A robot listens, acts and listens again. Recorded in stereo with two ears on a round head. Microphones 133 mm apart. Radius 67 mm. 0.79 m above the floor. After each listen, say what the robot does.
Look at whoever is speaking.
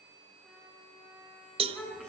Turn 30° left.
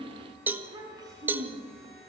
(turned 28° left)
Turn 30° right.
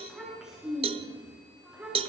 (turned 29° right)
Facing the child speaking, over 4 m away.